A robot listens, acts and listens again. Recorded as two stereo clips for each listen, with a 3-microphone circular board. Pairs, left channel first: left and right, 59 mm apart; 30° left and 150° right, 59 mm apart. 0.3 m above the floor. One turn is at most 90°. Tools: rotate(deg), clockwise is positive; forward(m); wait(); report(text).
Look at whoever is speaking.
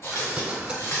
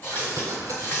wait()
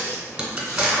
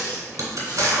wait()
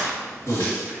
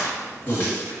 rotate(-15)
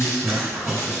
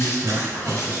report("Found it: a man speaking, straight ahead.")